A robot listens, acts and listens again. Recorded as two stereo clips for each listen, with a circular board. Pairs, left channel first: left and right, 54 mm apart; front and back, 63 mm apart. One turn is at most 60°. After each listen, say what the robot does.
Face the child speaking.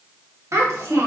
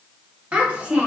Turn 60° right.
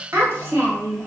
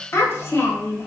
Turn 50° right.
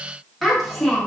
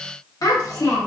Found it: a child speaking, straight ahead.